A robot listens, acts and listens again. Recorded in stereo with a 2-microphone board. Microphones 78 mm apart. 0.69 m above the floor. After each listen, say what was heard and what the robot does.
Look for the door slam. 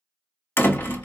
The door slam: about 30° left or 150° left. Turn 30° left.
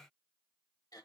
Keep listening.
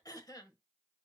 I heard a door slam, but can't make it out now. It was about straight ahead or 120° left.